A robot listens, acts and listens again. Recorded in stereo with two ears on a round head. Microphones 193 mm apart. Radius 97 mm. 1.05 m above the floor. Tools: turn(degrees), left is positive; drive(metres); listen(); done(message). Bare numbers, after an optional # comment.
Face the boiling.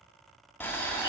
turn(30)
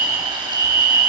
listen()
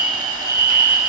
listen()
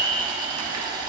# So it is at 20° right.
turn(-20)
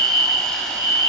listen()
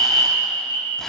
listen()
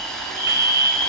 done("Found it: boiling, straight ahead.")